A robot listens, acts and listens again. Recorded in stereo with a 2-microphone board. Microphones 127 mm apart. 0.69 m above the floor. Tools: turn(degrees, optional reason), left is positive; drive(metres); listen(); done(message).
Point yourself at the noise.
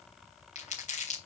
turn(degrees=70, reason="The crumpling: about 70° left or 110° left.")
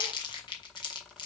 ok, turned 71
turn(degrees=35, reason="So it is at 35° left.")
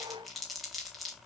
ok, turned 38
done("Found it: crumpling, straight ahead.")